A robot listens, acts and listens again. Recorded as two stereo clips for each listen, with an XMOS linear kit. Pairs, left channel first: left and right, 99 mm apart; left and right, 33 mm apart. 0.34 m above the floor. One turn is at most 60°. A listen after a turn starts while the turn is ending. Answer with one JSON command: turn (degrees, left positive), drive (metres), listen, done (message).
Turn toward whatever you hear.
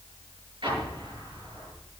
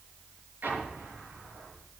{"turn": -55}
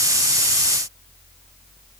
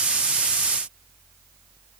{"listen": true}
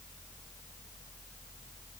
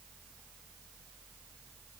{"done": "I heard an explosion, but can't make it out now. It was about straight ahead or 70° right."}